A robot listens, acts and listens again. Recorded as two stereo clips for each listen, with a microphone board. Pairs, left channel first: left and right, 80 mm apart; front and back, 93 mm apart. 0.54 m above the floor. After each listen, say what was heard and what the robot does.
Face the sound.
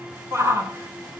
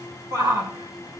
The shout: 140° right. Turn 140° right.
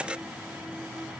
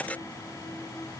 Keep listening.
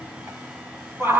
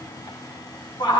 The shout is now 35° right. Turn 35° right.
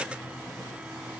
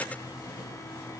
Keep listening.
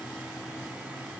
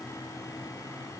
Keep listening.
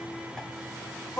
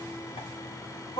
Facing the shout, 2 to 4 m away.